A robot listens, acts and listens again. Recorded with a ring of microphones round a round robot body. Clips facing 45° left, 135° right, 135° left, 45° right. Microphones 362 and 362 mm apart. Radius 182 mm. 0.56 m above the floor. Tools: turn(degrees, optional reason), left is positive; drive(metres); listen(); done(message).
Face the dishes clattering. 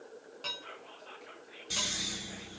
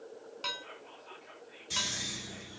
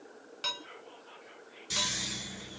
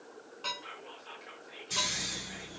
turn(degrees=160, reason="The dishes clattering: 160° left.")
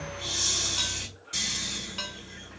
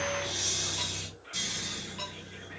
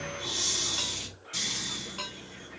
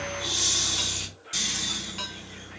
turn(degrees=30, reason="The dishes clattering is now 30° left.")
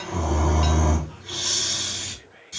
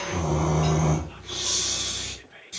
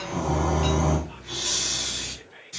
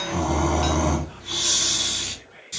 listen()
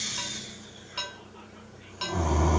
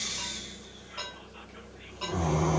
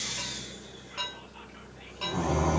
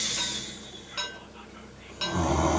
done("Facing the dishes clattering.")